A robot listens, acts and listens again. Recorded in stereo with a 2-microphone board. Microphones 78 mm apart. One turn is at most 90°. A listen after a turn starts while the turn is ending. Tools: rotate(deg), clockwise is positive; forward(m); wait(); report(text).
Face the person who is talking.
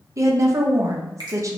rotate(40)
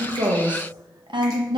rotate(90)
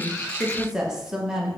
rotate(10)
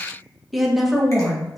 report("Found it: a woman speaking, straight ahead, under 1 m away.")